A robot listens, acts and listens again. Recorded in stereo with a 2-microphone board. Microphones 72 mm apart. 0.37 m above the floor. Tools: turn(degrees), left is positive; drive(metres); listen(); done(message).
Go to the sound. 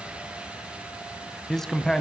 turn(degrees=30)
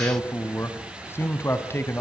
turn(degrees=145)
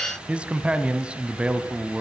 turn(degrees=-15)
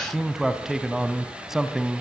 drive(metres=1.0)
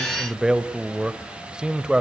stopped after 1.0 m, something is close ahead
turn(degrees=-15)
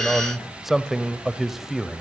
done("I am next to the man speaking.")